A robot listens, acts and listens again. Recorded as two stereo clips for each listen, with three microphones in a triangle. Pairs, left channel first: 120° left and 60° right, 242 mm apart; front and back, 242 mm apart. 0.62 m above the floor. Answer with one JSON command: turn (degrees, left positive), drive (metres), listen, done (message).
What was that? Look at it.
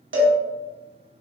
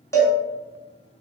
{"turn": -75}
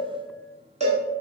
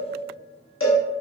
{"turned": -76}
{"done": "Facing the cowbell."}